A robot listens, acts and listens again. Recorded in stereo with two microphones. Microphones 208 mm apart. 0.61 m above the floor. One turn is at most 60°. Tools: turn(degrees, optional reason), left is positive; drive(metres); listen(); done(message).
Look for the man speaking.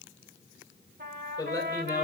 turn(degrees=20, reason="The man speaking: about 20° left or 160° left.")
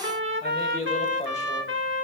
turn(degrees=35, reason="The man speaking: about 35° left or 145° left.")
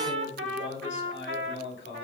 turn(degrees=60, reason="So it is at 115° left.")
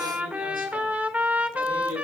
turn(degrees=55, reason="Nothing new. It was at 55° left.")
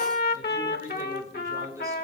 turn(degrees=-15, reason="The man speaking is now 15° right.")
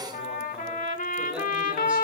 listen()
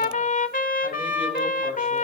listen()
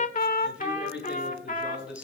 done("Facing the man speaking.")